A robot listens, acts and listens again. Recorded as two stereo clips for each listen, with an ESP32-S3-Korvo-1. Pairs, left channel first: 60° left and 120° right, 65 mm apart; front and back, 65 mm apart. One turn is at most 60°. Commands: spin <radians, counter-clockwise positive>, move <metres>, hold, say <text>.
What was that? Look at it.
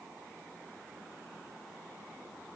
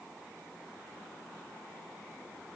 hold
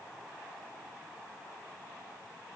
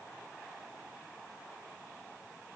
hold
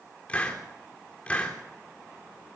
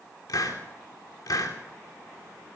spin -0.17
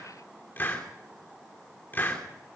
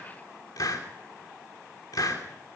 say Found it: a hiss, straight ahead, 2 to 4 m away.